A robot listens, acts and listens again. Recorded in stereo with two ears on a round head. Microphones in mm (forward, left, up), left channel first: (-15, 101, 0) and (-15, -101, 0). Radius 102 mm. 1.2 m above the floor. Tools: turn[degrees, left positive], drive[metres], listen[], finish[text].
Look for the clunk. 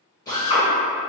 Action: listen[]
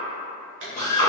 Thought: The clunk: about 55° right or 125° right.
Action: turn[-55]
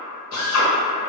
Action: listen[]
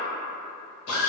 Action: finish[I heard a clunk, but can't make it out now. It was about straight ahead or 70° right.]